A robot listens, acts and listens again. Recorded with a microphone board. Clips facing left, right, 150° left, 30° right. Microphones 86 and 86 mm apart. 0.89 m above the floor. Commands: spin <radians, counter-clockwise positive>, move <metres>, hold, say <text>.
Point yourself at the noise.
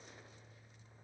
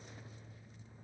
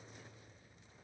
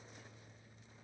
hold
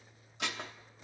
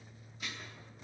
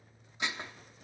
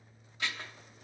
spin 1.40
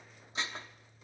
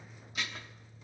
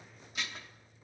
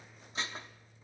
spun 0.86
spin 0.52
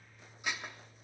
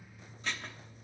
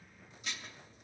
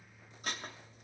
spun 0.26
spin 0.26
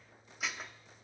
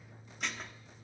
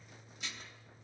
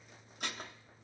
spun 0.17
say Found it: dishes clattering, straight ahead, 1 to 2 m away.